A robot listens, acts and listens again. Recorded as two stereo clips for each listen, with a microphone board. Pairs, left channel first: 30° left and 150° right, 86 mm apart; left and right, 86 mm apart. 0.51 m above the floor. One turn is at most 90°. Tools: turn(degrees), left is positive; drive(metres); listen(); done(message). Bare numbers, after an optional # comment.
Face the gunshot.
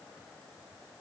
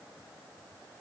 listen()
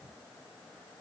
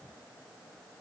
listen()
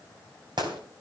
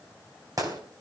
# The gunshot: 130° right.
turn(-90)
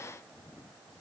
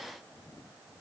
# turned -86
# Nothing new. It was at 45° right.
turn(-45)
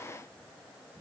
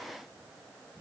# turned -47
done("Facing where the gunshot came from. I can't hear it now.")